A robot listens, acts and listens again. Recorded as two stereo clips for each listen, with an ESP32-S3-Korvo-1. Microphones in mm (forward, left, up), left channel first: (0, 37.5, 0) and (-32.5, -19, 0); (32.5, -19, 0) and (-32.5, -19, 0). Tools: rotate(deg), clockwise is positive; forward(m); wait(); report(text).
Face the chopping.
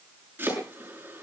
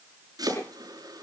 rotate(-180)
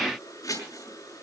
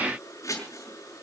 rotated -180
rotate(-35)
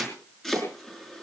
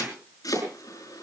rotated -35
rotate(25)
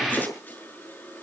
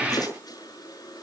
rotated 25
report("Found it: chopping, straight ahead, over 4 m away.")